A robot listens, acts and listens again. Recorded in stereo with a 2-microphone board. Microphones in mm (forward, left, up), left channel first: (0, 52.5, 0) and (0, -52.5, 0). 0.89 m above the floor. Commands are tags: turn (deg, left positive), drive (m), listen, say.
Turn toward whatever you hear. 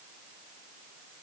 <listen/>
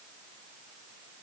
<listen/>
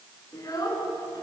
<turn deg="35"/>
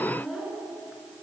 <say>Found it: a child speaking, straight ahead.</say>